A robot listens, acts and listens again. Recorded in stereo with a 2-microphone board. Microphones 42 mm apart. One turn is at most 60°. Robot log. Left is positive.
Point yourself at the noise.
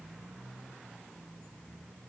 cmd idle
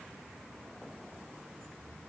cmd idle
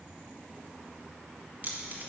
note: The keys jangling: about 45° right or 135° right.
cmd yaw -45
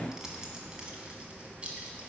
note: So it is at 30° right.
cmd yaw -30
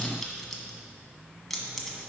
end: Found it: keys jangling, straight ahead, 1 to 2 m away.